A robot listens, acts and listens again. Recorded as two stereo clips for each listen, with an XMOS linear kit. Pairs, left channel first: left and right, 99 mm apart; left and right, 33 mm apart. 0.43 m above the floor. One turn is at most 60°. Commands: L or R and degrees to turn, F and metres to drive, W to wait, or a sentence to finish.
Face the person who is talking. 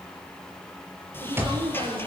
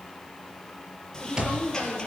R60
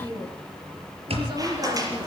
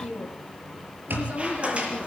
R50
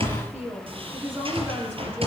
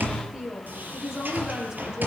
R20
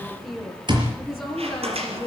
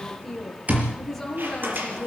Found it: a woman speaking, straight ahead, over 4 m away.